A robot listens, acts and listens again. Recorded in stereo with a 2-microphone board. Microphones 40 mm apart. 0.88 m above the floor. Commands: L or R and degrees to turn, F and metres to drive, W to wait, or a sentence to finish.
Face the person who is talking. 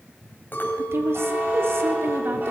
R75
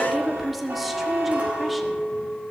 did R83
Found it: a woman speaking, straight ahead, 2 to 4 m away.